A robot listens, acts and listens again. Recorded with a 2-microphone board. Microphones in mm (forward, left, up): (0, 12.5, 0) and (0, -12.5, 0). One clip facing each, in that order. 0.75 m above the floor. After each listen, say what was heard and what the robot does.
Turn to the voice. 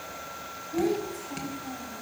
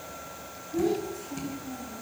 The child speaking: about 65° left or 115° left. Turn 65° left.
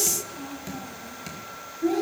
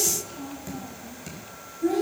So it is at 15° left. Turn 15° left.
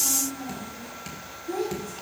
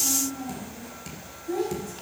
The child speaking is now 10° left. Turn 10° left.
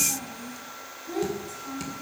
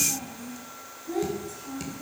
Found it: a child speaking, straight ahead.